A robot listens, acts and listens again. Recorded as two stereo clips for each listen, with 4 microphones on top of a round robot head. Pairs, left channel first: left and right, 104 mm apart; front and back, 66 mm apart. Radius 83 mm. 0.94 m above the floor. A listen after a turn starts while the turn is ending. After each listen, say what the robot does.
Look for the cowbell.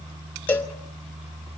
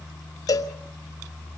Turn 20° left.
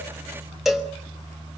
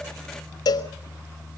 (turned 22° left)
Found it: a cowbell, straight ahead, 1 to 2 m away.